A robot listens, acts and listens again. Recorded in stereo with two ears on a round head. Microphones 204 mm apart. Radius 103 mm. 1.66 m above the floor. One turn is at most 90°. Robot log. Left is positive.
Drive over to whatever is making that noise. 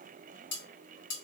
note: The cutlery clinking: about 55° left or 125° left.
cmd yaw +55
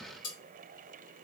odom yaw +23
note: So it is at 95° left.
cmd yaw +90
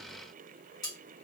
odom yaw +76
note: The cutlery clinking is now 20° left.
cmd yaw +20
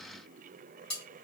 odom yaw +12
cmd fwd 1.0
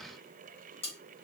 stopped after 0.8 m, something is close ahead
note: The cutlery clinking is now 15° left.
cmd yaw +15
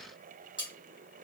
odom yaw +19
end: Arrived at the cutlery clinking, straight ahead.